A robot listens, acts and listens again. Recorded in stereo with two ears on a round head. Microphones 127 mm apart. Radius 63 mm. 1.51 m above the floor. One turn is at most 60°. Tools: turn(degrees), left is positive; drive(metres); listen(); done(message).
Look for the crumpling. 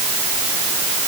listen()
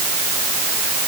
listen()
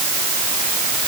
done("I can't make out crumpling to turn to.")